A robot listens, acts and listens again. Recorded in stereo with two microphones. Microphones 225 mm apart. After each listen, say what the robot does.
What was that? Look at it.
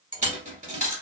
Turn 35° right.
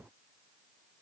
Keep listening.
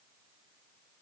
I heard a dropped coin, but can't make it out now. It was about straight ahead or 110° right.